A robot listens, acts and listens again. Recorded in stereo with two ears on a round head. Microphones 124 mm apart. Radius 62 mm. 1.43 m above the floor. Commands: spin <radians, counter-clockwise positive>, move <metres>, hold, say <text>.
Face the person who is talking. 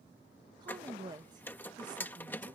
spin -0.52
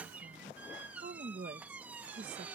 spin -2.09
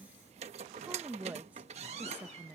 spin -0.17
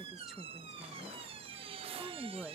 say Facing the woman speaking.